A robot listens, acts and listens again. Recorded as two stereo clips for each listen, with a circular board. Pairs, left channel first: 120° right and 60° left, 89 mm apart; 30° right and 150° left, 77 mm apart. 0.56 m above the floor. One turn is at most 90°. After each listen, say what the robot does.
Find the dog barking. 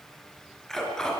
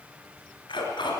Turn 35° right.
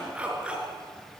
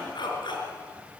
Turn 20° right.
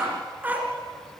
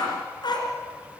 Turn 10° right.
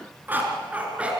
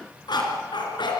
Turn 15° right.
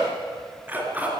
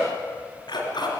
Turn 10° right.
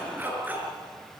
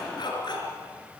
Turn 10° right.
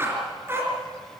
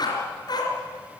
Facing the dog barking, 2 to 4 m away.